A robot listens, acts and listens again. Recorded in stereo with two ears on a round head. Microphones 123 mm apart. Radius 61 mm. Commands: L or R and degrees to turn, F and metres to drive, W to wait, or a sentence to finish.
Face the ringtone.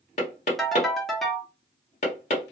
L30
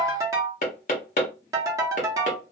R25
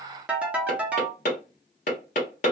R10
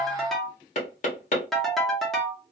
Facing the ringtone, under 1 m away.